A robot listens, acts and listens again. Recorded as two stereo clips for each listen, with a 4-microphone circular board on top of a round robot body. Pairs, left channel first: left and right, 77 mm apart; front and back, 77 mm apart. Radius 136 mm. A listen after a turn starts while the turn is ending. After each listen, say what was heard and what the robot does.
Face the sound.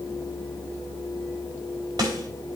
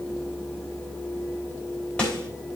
The snare drum: 70° right. Turn 70° right.
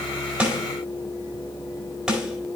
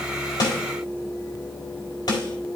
Facing the snare drum.